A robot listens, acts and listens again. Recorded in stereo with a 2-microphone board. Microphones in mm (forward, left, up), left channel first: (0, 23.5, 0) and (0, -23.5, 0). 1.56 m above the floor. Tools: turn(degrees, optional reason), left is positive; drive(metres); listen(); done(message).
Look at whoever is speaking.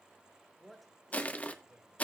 turn(degrees=-30)
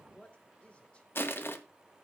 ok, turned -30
turn(degrees=25, reason="So it is at 25° left.")
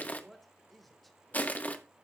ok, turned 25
done("Found it: a man speaking, straight ahead.")